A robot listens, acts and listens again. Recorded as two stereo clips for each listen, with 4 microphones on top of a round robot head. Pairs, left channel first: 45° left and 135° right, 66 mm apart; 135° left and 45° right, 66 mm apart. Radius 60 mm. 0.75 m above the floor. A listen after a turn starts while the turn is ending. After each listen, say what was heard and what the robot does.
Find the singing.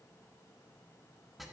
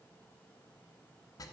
Keep listening.
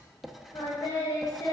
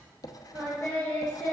The singing: 75° left. Turn 75° left.
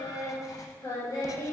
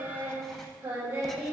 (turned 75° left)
The singing is now 10° left. Turn 10° left.
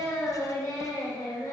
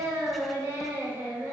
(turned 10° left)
The singing is now 15° left. Turn 15° left.
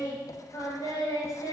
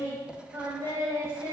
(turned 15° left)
Facing the singing.